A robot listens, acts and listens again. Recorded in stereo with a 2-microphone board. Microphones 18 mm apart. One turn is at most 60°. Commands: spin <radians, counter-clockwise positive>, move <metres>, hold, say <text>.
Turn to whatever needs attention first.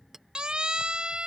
spin -0.87
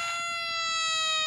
say Found it: a siren, straight ahead.